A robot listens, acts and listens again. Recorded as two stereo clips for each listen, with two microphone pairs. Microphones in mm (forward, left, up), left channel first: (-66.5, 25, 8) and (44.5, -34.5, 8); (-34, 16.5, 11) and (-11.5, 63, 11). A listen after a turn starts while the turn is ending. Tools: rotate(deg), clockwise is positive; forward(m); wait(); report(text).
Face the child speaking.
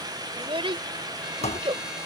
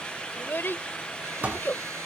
rotate(75)
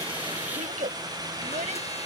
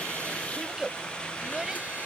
rotate(15)
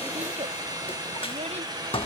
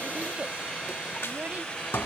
wait()
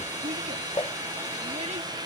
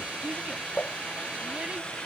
wait()
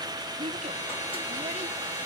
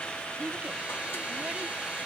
report("Found it: a child speaking, straight ahead.")